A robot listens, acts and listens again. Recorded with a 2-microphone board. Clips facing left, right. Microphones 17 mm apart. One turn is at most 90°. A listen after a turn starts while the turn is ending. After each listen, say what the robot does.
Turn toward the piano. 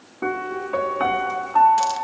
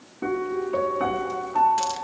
Turn 40° left.
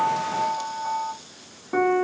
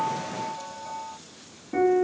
Turn 90° left.
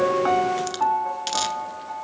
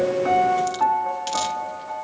Turn 10° right.
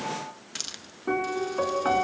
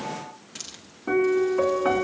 Found it: a piano, straight ahead, 1 to 2 m away.